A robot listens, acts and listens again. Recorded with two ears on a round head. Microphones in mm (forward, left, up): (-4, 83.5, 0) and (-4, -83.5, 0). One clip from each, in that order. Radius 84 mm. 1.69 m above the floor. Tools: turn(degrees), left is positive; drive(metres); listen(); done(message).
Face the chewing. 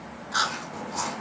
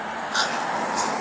turn(degrees=-30)
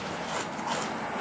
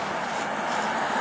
listen()
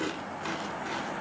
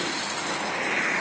listen()
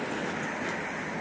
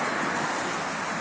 done("I heard chewing, but can't make it out now. It was about 20° left or 140° right.")